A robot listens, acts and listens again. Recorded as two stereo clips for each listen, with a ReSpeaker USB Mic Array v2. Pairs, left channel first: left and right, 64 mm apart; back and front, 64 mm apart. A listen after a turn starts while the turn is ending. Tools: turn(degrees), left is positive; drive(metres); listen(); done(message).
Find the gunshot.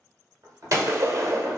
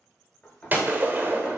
turn(degrees=-60)
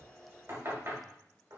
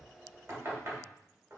done("I heard a gunshot from this way, but can't make it out now.")